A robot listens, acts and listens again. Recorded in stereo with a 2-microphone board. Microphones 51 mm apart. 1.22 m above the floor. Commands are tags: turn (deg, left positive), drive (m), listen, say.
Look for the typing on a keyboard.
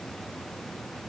<listen/>
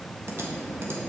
<turn deg="-65"/>
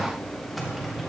<say>Found it: typing on a keyboard, straight ahead.</say>